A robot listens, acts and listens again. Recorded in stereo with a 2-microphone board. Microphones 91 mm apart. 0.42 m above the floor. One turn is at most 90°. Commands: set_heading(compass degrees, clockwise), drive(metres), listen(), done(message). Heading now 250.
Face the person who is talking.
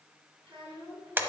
set_heading(340)
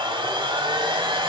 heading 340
listen()
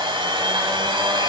listen()
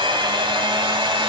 done("I heard a child speaking from this way, but can't make it out now.")